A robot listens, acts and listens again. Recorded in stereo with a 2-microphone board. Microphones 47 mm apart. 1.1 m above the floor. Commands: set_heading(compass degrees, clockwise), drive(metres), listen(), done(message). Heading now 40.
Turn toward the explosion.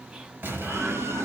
set_heading(90)
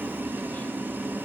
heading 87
listen()
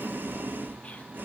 done("I heard an explosion, but can't make it out now. It was about 5° right or 85° right.")